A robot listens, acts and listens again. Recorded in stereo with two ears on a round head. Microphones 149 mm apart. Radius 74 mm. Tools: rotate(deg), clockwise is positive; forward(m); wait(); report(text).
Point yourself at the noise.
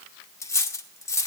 rotate(-20)
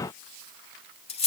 rotate(-140)
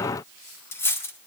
rotate(-15)
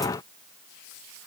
wait()
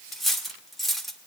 report("Found it: cutlery clinking, straight ahead, 1 to 2 m away.")